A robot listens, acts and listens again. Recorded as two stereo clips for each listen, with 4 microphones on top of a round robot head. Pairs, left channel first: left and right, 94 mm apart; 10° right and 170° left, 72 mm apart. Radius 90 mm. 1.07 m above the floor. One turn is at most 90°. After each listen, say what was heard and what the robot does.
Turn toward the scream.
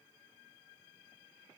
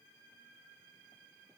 Keep listening.
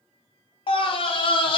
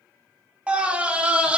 The scream: 95° left. Turn 90° left.
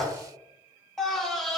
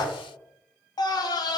Found it: a scream, straight ahead.